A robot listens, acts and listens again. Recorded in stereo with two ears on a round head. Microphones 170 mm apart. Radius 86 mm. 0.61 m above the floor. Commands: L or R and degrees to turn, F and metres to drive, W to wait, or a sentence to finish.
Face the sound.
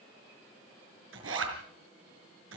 R70
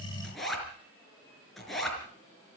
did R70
Found it: a zipper, straight ahead.